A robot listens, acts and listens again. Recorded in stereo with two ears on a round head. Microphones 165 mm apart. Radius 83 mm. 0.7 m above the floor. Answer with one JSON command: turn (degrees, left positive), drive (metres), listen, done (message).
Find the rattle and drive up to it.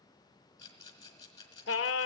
{"turn": 20}
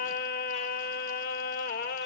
{"listen": true}
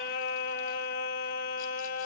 {"listen": true}
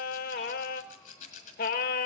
{"turn": 140}
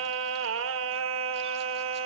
{"listen": true}
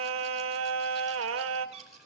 {"listen": true}
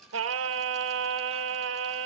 {"done": "I heard a rattle from this way, but can't make it out now. I did not reach it."}